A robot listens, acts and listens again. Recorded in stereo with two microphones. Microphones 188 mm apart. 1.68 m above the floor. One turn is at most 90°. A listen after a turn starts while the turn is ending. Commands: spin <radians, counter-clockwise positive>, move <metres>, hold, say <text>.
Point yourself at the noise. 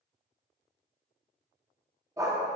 spin -0.35
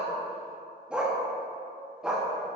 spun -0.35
spin -0.52
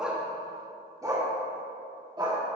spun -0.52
spin -0.44
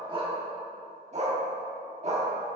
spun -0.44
spin -1.57
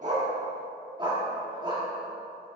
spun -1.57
spin -0.44
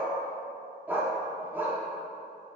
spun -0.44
spin -0.17
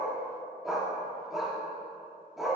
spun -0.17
say Found it: a dog barking, straight ahead, 1 to 2 m away.